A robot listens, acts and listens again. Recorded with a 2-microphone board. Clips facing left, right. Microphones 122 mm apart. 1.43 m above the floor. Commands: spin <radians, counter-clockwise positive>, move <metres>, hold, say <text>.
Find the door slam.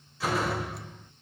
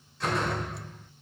spin 0.52
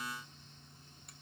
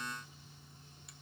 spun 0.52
hold
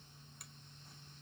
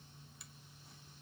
say I heard a door slam, but can't make it out now. It was about 25° right or 145° left.